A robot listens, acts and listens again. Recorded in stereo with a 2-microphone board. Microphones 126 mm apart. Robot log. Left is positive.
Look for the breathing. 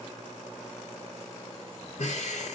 note: The breathing: about 75° left or 105° left.
cmd yaw +75
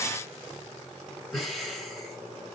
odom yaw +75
end: Found it: breathing, straight ahead, 1 to 2 m away.